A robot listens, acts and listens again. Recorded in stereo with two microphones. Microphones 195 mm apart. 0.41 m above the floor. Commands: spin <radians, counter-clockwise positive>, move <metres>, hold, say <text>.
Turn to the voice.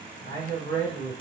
spin -1.05
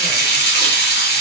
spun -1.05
hold
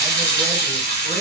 hold
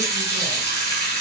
say I heard a man speaking, but can't make it out now. It was about straight ahead or 60° right.